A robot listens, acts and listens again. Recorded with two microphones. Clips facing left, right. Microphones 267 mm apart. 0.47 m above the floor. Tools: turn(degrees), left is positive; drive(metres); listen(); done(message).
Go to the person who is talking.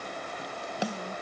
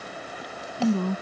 turn(degrees=-75)
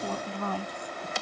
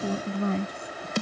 turn(degrees=-25)
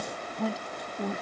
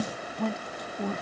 drive(metres=1.0)
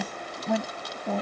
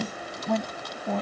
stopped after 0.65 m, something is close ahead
done("Something is in my way. I am facing the woman speaking but have not reached it.")